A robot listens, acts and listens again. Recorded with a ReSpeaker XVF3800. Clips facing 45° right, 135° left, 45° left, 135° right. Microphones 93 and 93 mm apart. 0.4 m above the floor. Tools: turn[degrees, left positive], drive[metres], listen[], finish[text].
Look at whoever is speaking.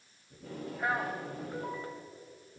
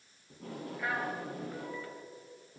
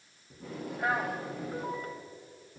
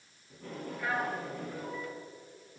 Thought: The man speaking: 10° left.
Action: turn[10]
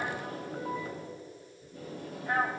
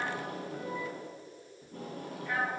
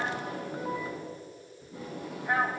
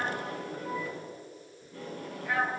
Action: finish[Found it: a man speaking, straight ahead.]